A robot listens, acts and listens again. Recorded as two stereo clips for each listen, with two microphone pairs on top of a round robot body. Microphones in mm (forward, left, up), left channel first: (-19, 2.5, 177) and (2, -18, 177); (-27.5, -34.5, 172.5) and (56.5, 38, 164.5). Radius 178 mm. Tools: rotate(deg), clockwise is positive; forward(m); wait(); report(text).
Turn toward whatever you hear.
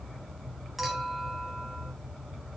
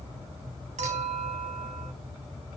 rotate(-40)
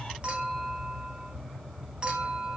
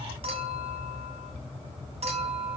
rotate(-10)
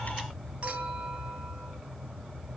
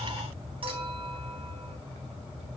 report("Found it: a clink, straight ahead, 2 to 4 m away.")